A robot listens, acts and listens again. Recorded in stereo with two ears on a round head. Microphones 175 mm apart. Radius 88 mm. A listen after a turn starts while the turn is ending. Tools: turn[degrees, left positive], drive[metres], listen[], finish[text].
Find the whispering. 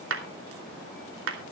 Action: listen[]
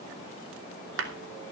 Action: listen[]
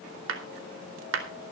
Action: finish[I can't make out whispering to turn to.]